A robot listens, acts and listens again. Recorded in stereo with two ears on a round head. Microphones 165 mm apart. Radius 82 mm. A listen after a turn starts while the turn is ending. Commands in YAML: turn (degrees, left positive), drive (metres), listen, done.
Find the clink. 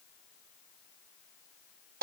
listen: true
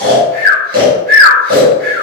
listen: true
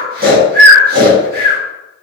done: "I can't make out a clink, only snoring."